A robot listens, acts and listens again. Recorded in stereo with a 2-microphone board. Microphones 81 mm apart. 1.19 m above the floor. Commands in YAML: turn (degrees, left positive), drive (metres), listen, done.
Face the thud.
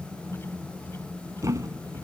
turn: -40
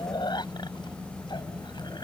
listen: true
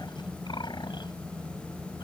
done: "I heard a thud, but can't make it out now. It was about straight ahead or 100° right."